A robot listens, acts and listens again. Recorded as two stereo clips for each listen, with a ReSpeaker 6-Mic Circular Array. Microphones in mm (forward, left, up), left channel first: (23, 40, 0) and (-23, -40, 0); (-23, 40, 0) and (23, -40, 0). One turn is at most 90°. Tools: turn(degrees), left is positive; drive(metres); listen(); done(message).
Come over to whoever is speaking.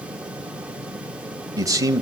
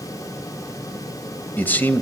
turn(degrees=-90)
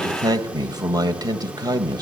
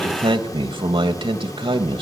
turn(degrees=-80)
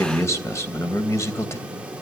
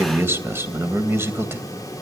drive(metres=1.0)
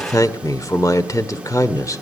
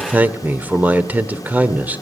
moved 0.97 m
turn(degrees=10)
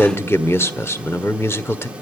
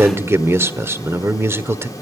drive(metres=1.0)
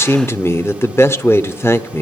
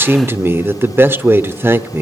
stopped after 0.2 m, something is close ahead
done("Arrived at the man speaking, straight ahead.")